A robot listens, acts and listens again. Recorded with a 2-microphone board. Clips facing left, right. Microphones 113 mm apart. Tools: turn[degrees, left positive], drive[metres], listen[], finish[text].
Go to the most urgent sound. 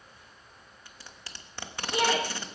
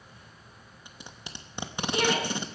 Thought: The shout: about 20° left or 160° left.
Action: turn[20]
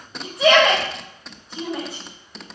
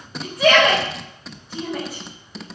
Action: drive[1.0]
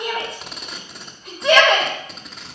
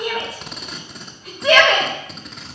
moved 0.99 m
Action: drive[1.0]
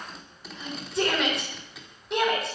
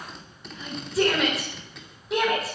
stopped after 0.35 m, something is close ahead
Action: finish[Something is in my way. I am facing the shout but have not reached it.]